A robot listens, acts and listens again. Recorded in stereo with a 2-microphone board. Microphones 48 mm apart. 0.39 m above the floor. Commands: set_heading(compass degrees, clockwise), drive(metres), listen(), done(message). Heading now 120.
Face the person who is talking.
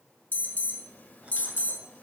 listen()
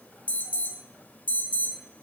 listen()
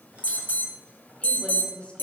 set_heading(90)
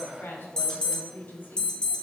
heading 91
set_heading(336)
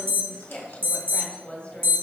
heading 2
set_heading(332)
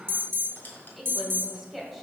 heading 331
done("Facing the woman speaking.")